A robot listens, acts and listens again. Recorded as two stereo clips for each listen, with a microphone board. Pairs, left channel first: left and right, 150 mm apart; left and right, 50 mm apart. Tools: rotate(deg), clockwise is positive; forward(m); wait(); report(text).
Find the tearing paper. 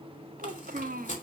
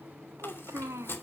rotate(-55)
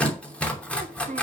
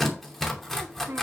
rotate(-10)
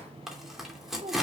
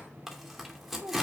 report("Found it: tearing paper, straight ahead.")